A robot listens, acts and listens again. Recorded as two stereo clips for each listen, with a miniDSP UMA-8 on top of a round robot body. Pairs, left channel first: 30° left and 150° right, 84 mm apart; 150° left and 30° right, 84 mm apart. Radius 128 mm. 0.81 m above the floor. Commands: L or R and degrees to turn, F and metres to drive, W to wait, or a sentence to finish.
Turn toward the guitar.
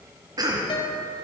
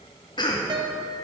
Facing the guitar, 1 to 2 m away.